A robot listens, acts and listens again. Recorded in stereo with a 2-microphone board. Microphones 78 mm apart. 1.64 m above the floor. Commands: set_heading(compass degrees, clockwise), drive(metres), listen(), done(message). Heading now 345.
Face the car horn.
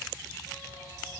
listen()
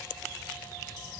listen()
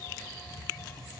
done("I can't make out a car horn to turn to.")